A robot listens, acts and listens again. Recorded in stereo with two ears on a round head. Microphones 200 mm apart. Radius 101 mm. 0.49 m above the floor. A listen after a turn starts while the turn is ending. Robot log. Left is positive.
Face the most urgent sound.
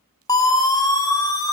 note: The siren: about 15° left or 165° left.
cmd yaw +15
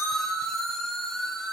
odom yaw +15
end: Found it: a siren, straight ahead.